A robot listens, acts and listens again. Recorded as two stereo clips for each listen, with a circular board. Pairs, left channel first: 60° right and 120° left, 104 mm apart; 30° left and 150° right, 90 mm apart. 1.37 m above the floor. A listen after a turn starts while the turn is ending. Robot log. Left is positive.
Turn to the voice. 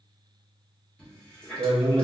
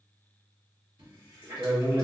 note: The man speaking: 155° left.
cmd yaw +155
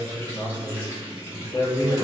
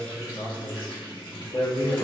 note: The man speaking is now 15° right.
cmd yaw -15
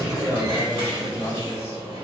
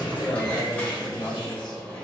end: Found it: a man speaking, straight ahead, under 1 m away.